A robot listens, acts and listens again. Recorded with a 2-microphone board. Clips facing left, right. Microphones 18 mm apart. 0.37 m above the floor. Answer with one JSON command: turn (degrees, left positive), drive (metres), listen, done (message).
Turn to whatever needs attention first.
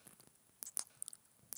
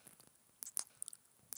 {"listen": true}
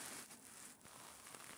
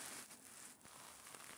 {"listen": true}
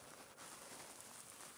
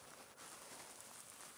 {"done": "I can't make out anything urgent to turn to."}